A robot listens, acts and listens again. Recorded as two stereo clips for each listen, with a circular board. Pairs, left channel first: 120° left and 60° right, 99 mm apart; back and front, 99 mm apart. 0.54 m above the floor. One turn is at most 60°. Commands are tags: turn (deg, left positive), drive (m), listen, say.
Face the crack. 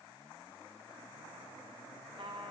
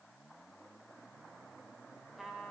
<listen/>
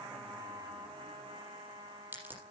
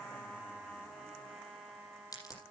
<turn deg="-60"/>
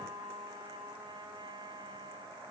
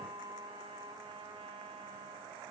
<turn deg="-60"/>
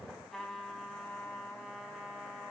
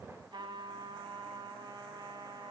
<turn deg="-10"/>
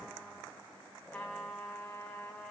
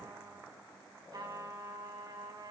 <say>Facing where the crack came from. I can't hear it now.</say>